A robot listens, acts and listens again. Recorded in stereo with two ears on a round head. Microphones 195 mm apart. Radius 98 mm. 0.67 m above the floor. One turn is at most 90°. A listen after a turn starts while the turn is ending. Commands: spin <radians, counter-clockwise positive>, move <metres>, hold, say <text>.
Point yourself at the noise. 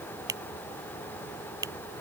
spin -0.26
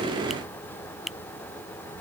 say Found it: a finger snap, straight ahead.